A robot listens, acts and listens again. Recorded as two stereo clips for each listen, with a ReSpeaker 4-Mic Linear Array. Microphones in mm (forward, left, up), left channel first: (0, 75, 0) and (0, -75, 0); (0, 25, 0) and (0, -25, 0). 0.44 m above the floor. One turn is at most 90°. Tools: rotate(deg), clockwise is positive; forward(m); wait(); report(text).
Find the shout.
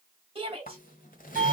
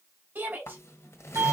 rotate(35)
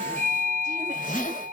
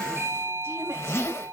wait()
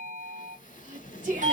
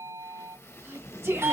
rotate(90)
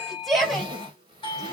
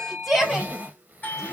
report("Facing the shout, 2 to 4 m away.")